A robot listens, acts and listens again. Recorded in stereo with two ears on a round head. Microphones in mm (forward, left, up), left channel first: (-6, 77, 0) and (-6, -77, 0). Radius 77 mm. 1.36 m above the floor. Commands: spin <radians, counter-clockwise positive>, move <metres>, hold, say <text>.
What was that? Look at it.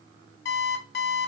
spin 1.13
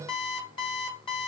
spin 0.52
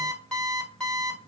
say Found it: an alarm clock, straight ahead, 1 to 2 m away.